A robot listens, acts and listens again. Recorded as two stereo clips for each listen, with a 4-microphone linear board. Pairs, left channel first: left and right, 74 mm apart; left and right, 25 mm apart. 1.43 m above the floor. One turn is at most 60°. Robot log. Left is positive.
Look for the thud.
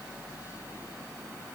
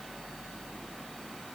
cmd idle
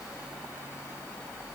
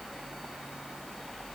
cmd idle
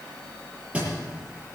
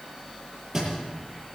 note: The thud: about 15° right or 165° right.
cmd yaw -15
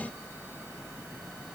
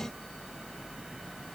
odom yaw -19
cmd idle
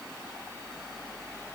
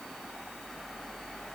end: I heard a thud, but can't make it out now. It was about 5° left or 145° right.